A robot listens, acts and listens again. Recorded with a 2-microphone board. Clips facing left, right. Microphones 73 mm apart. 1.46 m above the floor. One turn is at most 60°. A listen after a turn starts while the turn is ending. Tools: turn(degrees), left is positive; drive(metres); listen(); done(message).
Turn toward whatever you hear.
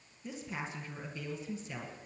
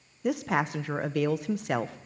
turn(degrees=-60)
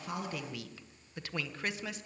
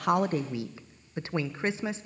turn(degrees=-30)
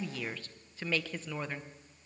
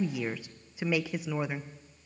turn(degrees=-15)
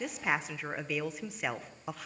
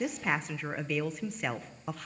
done("Facing the woman speaking, under 1 m away.")